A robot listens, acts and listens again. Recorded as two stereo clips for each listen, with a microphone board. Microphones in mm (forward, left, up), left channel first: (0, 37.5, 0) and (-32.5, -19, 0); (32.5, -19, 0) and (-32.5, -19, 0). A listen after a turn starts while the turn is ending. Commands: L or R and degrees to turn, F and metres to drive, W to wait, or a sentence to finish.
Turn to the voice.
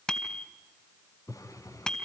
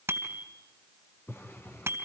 W
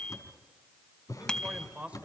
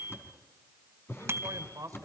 L175
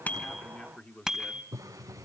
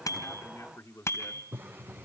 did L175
Facing the man speaking, 1 to 2 m away.